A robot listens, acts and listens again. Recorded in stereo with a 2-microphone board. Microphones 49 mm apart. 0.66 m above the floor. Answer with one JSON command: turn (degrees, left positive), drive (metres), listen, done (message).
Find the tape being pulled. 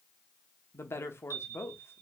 {"listen": true}
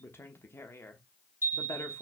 {"listen": true}
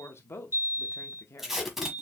{"turn": -30}
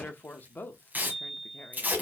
{"turn": -145}
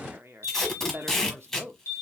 {"turn": 10}
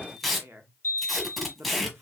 {"done": "Facing the tape being pulled."}